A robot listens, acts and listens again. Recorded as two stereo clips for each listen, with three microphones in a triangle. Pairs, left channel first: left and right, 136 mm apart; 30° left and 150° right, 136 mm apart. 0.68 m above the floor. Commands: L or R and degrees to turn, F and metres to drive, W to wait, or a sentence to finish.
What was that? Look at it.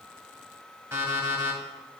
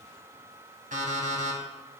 R165
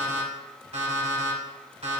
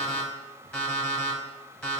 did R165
R55
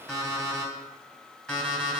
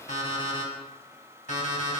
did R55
Found it: an alarm clock, straight ahead.